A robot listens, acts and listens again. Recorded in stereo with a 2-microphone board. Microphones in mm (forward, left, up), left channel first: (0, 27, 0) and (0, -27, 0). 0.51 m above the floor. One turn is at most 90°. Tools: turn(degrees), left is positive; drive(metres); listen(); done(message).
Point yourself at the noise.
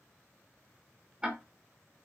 turn(degrees=-15)
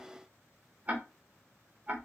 turn(degrees=-90)
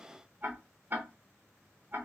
turn(degrees=-50)
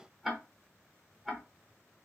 done("Found it: ticking, straight ahead.")